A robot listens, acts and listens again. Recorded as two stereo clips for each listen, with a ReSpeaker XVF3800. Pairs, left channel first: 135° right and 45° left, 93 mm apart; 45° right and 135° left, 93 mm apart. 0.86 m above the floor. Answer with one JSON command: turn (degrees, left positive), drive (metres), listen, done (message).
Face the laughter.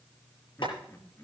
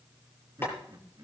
{"turn": 170}
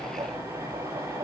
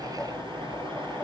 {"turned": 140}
{"turn": 30}
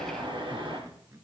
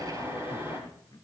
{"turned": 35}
{"done": "Facing the laughter."}